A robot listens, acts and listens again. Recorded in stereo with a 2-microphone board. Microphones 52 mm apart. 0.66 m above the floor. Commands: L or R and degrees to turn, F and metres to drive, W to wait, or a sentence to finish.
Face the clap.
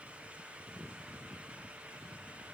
W
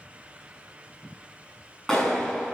L30
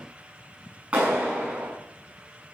R25
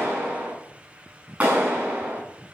R30
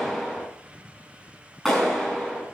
Found it: a clap, straight ahead, over 4 m away.